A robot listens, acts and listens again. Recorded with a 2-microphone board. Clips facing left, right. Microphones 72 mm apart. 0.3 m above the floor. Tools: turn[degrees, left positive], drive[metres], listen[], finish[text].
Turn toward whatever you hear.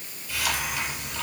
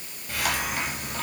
Thought: The hiss: about 50° right or 130° right.
Action: turn[-50]
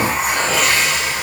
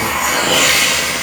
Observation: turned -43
Thought: So it is at 90° right.
Action: turn[-90]
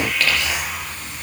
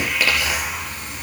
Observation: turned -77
Thought: The hiss is now 10° right.
Action: turn[-10]
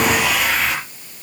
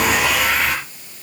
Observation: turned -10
Action: finish[Found it: a hiss, straight ahead.]